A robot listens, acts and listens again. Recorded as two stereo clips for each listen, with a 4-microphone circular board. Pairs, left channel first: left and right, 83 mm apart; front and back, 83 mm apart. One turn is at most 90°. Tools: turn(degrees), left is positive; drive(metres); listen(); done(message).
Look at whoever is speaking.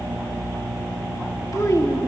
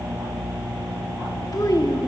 turn(degrees=40)
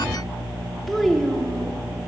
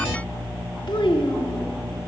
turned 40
done("Facing the child speaking, 2 to 4 m away.")